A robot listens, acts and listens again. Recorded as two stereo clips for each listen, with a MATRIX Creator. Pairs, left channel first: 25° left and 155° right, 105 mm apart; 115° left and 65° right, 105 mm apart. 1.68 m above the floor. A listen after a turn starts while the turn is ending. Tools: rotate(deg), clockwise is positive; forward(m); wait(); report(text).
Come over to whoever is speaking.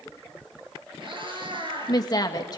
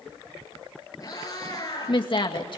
rotate(-75)
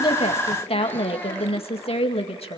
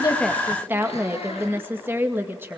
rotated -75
forward(1.0)
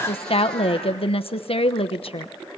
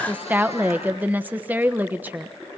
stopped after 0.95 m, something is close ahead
report("I am next to the woman speaking.")